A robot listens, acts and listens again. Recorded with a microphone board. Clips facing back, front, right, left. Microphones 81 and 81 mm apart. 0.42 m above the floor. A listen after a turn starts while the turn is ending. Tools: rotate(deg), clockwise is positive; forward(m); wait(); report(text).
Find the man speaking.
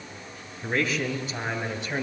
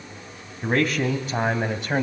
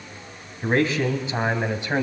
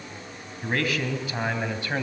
rotate(20)
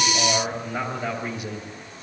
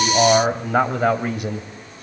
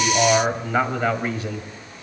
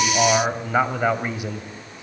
rotate(-20)
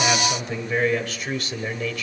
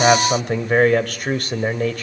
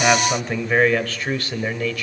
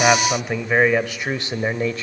rotate(-35)
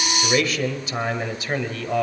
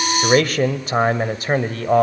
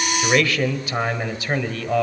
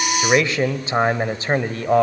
rotate(-40)
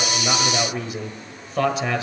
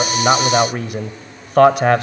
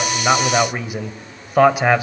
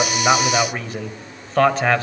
rotate(15)
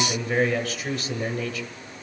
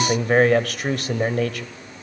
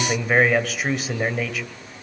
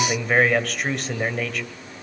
report("Facing the man speaking, 1 to 2 m away.")